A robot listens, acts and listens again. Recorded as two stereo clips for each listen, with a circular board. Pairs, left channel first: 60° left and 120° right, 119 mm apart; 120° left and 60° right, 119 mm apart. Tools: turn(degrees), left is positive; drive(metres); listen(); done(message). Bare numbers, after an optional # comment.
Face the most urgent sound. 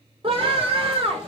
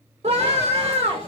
# The scream: 85° right.
turn(-85)
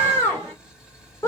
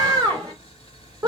done("Found it: a scream, straight ahead, 2 to 4 m away.")